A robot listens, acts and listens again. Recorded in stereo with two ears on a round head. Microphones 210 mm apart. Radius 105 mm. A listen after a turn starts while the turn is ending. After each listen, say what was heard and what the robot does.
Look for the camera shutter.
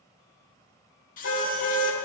The camera shutter: about 35° left or 145° left. Turn 35° left.
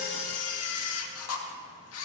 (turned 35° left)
So it is at 105° left. Turn 105° left.
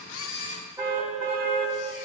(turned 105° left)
The camera shutter is now 30° left. Turn 30° left.
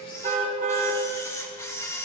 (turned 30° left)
The camera shutter is now 10° left. Turn 10° left.
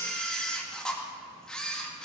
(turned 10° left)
Facing the camera shutter.